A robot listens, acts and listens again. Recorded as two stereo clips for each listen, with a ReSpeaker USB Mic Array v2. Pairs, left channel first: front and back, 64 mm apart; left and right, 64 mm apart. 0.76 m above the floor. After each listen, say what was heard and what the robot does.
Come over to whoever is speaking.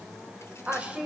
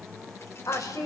The woman speaking: 110° left. Turn 110° left.
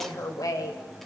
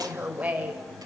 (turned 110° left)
The woman speaking is now 20° right. Turn 20° right.
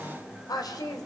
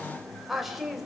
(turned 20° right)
Drive 1.0 m forward.
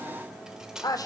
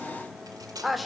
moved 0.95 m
Drive 1.0 m forward.
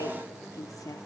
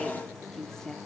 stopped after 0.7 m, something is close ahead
The woman speaking is now 10° left. Turn 10° left.
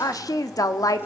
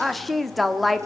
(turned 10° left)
Arrived at the woman speaking, straight ahead.